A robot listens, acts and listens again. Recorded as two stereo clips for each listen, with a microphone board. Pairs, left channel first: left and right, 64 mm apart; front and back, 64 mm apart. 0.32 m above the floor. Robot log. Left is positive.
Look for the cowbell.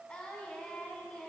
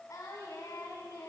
cmd idle
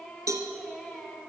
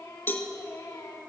note: The cowbell: 55° right.
cmd yaw -55
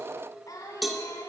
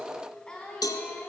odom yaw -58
end: Facing the cowbell.